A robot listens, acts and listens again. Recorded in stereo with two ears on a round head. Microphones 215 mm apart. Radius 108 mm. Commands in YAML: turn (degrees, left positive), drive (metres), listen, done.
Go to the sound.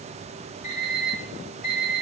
turn: 35
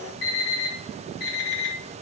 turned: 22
turn: 125
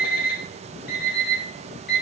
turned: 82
turn: 40
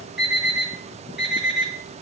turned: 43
drive: 1.0
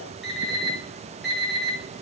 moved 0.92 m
drive: 1.0
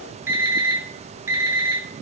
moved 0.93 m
turn: -10
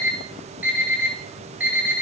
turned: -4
drive: 1.0
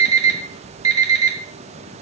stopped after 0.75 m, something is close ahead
turn: -15
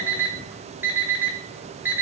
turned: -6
turn: -10
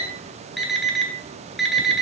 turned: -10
done: "Arrived at the alarm clock, straight ahead."